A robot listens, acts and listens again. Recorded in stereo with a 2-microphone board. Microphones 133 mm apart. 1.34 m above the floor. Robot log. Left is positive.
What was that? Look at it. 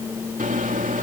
cmd yaw -90
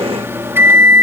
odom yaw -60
note: So it is at 15° right.
cmd yaw -15
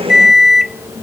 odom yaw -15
end: Found it: a microwave, straight ahead.